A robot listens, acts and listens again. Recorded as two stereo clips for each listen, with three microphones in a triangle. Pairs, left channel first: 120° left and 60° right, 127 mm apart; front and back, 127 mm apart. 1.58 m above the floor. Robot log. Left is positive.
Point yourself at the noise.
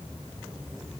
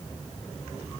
cmd idle
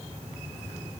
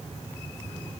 cmd idle
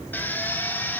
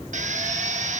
note: The drill: 165° right.
cmd yaw -165
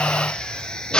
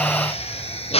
note: The drill is now 35° left.
cmd yaw +35
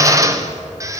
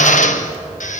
end: Facing the drill.